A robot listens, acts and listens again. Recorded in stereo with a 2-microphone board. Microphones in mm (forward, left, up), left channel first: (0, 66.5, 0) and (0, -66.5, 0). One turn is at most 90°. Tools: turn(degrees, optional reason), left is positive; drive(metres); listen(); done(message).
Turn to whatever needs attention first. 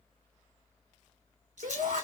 turn(degrees=-90)
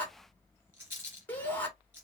turn(degrees=15, reason="So it is at 15° left.")
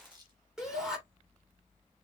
done("Facing the shout.")